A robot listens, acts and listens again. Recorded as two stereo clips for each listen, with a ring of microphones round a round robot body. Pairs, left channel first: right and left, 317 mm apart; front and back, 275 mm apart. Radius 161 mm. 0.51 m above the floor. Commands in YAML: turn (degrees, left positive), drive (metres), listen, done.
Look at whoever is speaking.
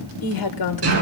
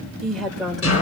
turn: -90
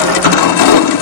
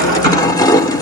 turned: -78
turn: -10
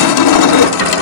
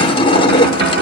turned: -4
turn: -10
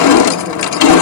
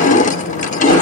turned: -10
done: "Facing where the woman speaking came from. I can't hear it now."